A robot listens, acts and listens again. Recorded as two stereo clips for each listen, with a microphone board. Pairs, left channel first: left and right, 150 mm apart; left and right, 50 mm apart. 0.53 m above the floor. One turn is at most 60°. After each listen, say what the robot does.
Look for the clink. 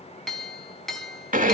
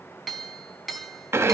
Turn 30° left.
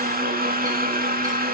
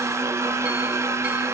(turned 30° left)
Keep listening.
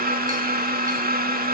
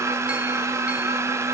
Keep listening.
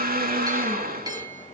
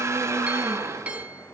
Turn 25° right.
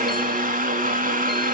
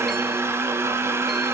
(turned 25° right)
Keep listening.
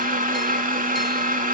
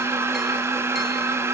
Keep listening.
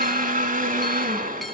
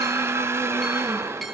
Facing where the clink came from. I can't hear it now.